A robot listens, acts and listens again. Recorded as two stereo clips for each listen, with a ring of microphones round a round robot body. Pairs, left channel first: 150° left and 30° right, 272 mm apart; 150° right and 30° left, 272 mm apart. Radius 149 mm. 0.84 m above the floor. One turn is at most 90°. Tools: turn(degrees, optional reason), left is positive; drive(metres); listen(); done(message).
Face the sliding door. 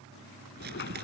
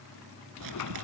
turn(degrees=-90, reason="The sliding door: 160° right.")
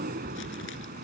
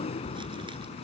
turn(degrees=-85, reason="The sliding door is now 85° right.")
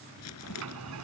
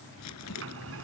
done("Found it: a sliding door, straight ahead.")